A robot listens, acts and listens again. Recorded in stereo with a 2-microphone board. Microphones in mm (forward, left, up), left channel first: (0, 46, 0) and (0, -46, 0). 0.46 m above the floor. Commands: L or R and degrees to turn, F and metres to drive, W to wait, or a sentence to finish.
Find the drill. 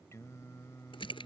W
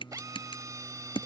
R40
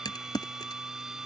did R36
R10
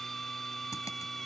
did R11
Found it: a drill, straight ahead.